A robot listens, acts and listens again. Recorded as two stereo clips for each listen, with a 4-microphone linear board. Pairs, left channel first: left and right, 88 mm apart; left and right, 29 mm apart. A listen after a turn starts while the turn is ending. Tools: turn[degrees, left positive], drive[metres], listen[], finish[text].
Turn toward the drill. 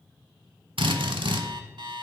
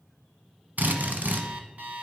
Action: turn[-90]
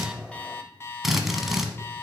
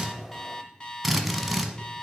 Action: finish[Found it: a drill, straight ahead, 1 to 2 m away.]